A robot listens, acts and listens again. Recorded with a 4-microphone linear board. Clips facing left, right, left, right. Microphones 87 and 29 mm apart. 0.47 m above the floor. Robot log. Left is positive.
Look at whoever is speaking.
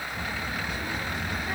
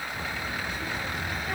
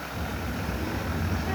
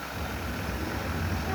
note: The child speaking: about 15° left or 165° left.
cmd yaw +15
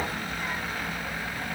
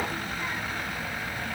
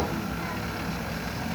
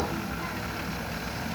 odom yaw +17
cmd yaw +30
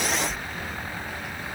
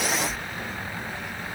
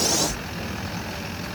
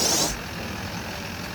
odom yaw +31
note: So it is at 30° right.
cmd yaw -30
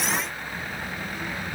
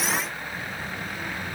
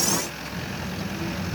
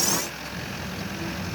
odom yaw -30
end: Found it: a child speaking, straight ahead.